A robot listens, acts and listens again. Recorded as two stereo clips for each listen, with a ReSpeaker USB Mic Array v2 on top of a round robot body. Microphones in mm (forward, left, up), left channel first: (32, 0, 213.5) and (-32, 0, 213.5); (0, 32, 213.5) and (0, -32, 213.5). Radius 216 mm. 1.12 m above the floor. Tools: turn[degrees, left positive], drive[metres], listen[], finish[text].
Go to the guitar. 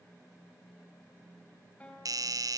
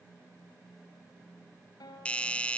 Thought: The guitar: 70° left.
Action: turn[70]
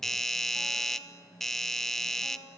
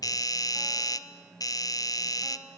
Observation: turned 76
Action: listen[]
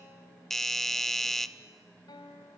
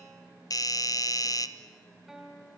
Action: drive[1.0]
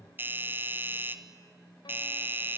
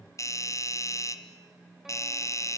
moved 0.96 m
Action: listen[]
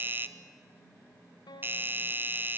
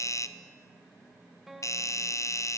Action: drive[1.0]
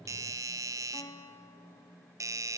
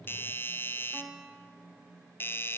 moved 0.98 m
Thought: The guitar is now 10° right.
Action: turn[-10]
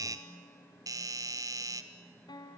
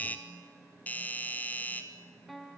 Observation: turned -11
Action: drive[1.0]
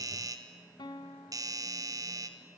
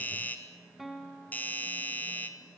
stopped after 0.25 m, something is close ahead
Action: finish[I am next to the guitar.]